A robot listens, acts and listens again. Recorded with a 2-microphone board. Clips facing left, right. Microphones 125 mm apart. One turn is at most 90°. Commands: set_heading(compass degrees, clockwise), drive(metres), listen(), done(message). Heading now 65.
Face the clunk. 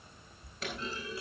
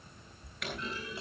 set_heading(35)
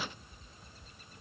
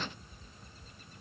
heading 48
listen()
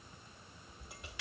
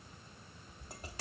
done("I heard a clunk, but can't make it out now. It was about 10° left or 135° left.")